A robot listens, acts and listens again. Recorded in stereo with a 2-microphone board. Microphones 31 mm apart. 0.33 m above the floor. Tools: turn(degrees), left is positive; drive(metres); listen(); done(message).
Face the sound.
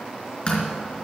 turn(degrees=35)
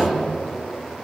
listen()
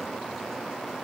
done("I heard a door slam, but can't make it out now. It was about straight ahead or 110° left.")